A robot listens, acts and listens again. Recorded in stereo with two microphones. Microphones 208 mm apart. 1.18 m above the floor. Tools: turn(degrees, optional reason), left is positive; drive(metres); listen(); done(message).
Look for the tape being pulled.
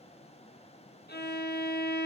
listen()
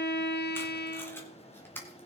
turn(degrees=30)
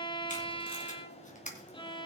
turn(degrees=140, reason="So it is at 140° left.")
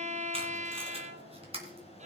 turn(degrees=-30, reason="The tape being pulled is now 30° right.")
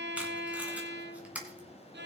done("Found it: tape being pulled, straight ahead.")